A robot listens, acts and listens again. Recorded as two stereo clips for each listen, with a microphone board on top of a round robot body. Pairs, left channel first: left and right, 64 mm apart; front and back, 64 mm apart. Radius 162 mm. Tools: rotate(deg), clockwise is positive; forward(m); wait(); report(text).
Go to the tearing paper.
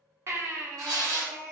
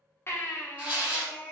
rotate(110)
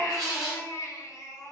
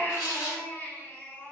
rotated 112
forward(1.0)
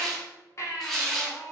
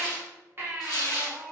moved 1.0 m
forward(1.0)
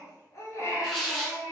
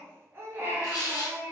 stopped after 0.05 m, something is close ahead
report("I am next to the tearing paper.")